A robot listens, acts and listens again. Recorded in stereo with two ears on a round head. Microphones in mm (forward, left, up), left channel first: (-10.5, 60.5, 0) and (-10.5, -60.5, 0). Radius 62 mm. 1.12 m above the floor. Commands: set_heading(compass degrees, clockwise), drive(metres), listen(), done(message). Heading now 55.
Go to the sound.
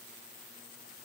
listen()
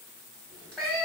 set_heading(25)
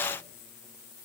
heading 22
listen()
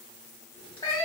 set_heading(242)
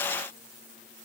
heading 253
set_heading(243)
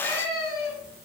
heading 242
drive(1.0)
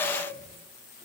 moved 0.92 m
listen()
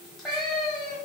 drive(1.0)
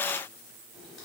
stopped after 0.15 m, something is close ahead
done("Arrived at the cat meowing, straight ahead.")